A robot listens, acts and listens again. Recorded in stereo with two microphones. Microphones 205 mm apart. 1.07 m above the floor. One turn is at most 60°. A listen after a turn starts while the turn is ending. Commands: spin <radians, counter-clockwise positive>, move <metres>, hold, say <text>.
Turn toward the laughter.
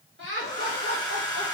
spin -1.05
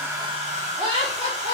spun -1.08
spin -0.61
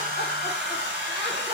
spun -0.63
hold
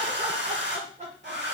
spin -0.61
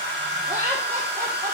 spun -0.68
spin -0.26
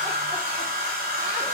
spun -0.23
hold
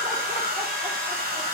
hold
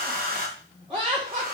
say Found it: laughter, straight ahead.